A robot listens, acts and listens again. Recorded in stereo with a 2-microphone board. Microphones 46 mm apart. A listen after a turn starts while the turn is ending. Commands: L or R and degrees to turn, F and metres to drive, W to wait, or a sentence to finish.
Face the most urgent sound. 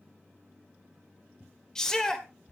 L30
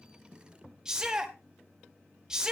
R15
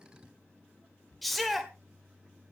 Facing the shout.